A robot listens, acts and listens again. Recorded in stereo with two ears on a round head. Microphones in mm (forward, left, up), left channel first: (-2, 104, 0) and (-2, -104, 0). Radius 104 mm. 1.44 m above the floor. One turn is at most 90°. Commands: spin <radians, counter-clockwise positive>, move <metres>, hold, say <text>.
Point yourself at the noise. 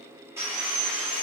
spin -0.52
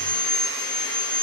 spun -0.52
spin 0.35
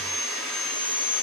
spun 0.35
say Facing the sawing.